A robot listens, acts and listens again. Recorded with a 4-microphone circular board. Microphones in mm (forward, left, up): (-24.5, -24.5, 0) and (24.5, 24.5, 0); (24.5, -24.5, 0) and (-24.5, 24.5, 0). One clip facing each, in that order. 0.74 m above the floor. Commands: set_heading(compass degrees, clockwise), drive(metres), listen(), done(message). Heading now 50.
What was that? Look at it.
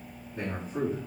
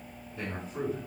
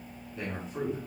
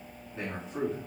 set_heading(225)
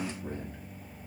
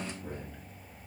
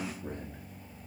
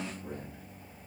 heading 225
set_heading(290)
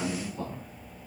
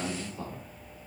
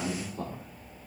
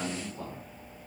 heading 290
set_heading(335)
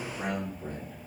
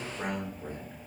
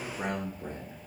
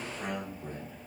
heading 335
set_heading(10)
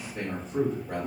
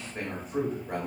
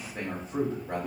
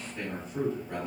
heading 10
set_heading(30)
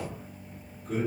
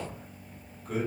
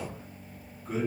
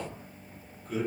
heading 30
done("Facing the man speaking.")